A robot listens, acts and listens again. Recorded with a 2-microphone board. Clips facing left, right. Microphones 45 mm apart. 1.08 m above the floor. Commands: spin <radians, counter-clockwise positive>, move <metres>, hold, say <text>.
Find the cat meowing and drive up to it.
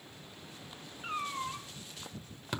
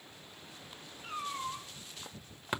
spin 0.96
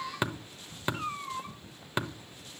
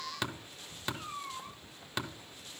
spin 1.31
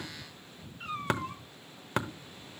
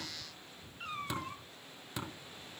move 1.0
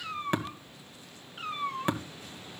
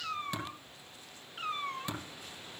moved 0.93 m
move 1.0
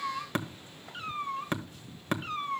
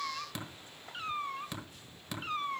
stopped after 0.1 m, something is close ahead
say Arrived at the cat meowing, straight ahead.